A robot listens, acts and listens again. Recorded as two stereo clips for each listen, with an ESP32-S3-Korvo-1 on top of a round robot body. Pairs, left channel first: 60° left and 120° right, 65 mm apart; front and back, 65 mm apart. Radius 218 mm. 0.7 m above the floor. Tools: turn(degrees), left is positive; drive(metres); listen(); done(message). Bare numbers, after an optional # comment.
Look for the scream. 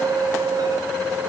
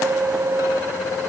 listen()
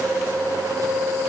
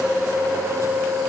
listen()
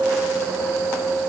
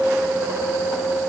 done("I can't make out a scream.")